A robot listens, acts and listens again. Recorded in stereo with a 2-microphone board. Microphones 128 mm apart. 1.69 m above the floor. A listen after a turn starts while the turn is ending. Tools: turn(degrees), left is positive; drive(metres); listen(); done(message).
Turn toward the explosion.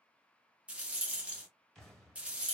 turn(degrees=30)
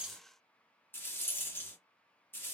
listen()
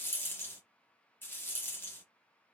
done("I heard an explosion, but can't make it out now. It was about 25° right or 145° left.")